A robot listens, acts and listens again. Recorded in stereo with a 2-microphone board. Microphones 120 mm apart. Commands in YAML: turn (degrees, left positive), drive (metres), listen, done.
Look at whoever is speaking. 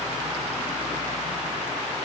listen: true
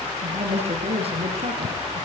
turn: -55
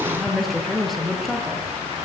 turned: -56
done: "Found it: a woman speaking, straight ahead."